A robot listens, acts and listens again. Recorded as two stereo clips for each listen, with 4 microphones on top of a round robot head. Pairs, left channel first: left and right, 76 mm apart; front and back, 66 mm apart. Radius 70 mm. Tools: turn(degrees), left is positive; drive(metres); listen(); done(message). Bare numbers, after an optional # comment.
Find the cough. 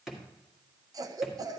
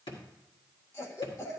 # The cough: 50° right.
turn(-50)
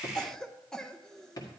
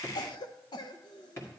done("Found it: a cough, straight ahead, under 1 m away.")